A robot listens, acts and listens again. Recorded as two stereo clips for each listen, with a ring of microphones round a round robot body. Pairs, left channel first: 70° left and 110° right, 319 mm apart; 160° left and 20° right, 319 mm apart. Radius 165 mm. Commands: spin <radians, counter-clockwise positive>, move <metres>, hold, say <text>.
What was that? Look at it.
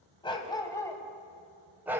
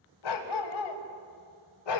spin 2.88
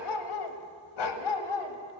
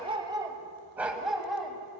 spin 1.22
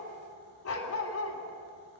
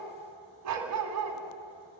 spin 0.35
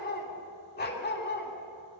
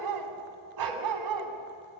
say Found it: a dog barking, straight ahead.